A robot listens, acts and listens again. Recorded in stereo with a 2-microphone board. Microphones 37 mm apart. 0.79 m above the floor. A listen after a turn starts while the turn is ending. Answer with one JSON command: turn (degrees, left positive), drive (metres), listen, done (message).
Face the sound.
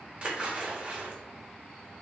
{"turn": -35}
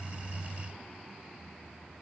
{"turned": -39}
{"listen": true}
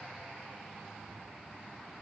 {"done": "I heard a splash, but can't make it out now. It was about straight ahead or 105° right."}